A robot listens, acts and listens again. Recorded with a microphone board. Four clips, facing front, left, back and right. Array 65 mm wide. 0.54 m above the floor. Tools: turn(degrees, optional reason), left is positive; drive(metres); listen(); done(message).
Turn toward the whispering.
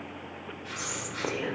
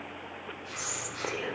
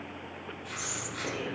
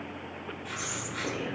turn(degrees=35, reason="The whispering: 35° left.")
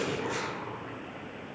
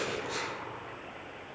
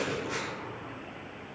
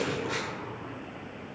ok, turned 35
listen()
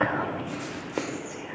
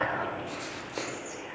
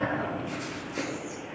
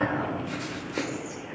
done("Found it: whispering, straight ahead.")